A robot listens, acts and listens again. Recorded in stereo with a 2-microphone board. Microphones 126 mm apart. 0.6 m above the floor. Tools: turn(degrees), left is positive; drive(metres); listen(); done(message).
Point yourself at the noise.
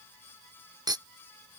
turn(degrees=-35)
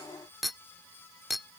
done("Found it: a clink, straight ahead.")